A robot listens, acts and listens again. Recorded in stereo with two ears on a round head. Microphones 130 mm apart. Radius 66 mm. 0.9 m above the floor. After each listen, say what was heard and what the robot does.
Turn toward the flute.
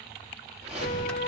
The flute: about 70° left or 110° left. Turn 70° left.
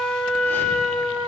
Found it: a flute, straight ahead.